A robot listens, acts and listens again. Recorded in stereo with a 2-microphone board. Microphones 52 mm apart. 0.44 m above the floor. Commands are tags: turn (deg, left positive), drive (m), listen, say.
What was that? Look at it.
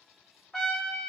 <turn deg="30"/>
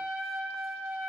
<turn deg="-20"/>
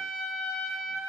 <say>Found it: a trumpet, straight ahead.</say>